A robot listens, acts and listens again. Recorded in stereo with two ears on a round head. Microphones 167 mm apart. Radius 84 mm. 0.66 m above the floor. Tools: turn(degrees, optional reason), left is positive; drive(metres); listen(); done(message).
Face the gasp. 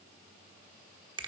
listen()
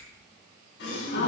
turn(degrees=65, reason="The gasp: about 65° left or 115° left.")
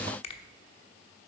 listen()
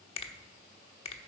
done("I heard a gasp, but can't make it out now. It was about straight ahead or 50° left.")